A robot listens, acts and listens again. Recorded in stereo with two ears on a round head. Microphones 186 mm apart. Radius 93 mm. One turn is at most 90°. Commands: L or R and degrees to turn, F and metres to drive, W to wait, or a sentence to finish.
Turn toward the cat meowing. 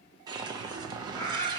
R40
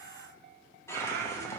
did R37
R90
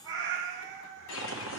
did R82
R15
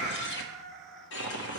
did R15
Facing the cat meowing.